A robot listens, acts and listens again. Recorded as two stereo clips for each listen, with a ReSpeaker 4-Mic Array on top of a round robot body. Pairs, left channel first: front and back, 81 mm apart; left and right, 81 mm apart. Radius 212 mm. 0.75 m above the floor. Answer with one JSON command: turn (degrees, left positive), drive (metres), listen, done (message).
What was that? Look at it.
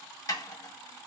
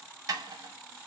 {"turn": -45}
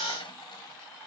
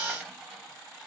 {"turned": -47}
{"listen": true}
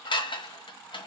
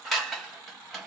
{"done": "Facing the dishes clattering."}